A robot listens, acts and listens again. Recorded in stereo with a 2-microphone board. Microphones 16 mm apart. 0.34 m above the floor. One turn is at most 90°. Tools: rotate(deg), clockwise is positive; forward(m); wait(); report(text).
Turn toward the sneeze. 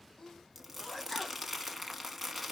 rotate(-40)
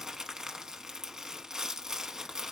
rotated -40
wait()
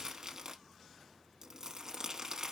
report("I heard a sneeze, but can't make it out now. It was about straight ahead or 100° left.")